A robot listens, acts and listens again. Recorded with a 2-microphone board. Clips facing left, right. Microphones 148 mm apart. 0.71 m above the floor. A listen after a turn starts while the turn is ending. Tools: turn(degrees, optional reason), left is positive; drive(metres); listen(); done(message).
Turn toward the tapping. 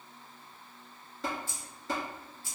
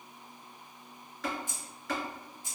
turn(degrees=30, reason="The tapping: about 30° left or 150° left.")
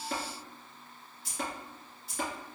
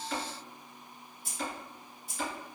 turn(degrees=120, reason="So it is at 120° left.")
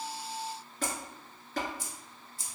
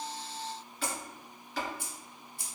turn(degrees=50, reason="The tapping is now 50° left.")
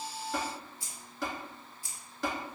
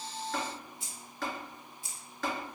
turn(degrees=10, reason="The tapping is now 10° left.")
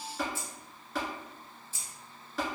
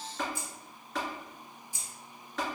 done("Found it: tapping, straight ahead.")